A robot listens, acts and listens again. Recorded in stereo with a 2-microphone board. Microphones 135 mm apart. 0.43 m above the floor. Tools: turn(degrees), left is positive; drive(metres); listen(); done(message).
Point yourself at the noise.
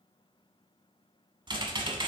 turn(degrees=-35)
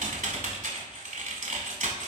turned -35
turn(degrees=-110)
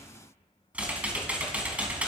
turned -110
turn(degrees=-10)
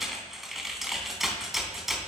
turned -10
done("Facing the typing on a keyboard, 1 to 2 m away.")